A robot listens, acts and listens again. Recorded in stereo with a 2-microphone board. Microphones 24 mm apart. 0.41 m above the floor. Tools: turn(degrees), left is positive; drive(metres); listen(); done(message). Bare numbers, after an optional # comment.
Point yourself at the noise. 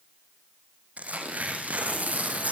turn(-90)
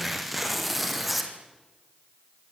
done("Facing the tearing paper, 2 to 4 m away.")